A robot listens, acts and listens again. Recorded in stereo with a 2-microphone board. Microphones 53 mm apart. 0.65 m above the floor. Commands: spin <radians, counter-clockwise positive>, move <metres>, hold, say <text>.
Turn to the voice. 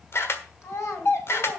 spin 1.05
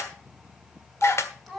say Found it: a child speaking, straight ahead, 2 to 4 m away.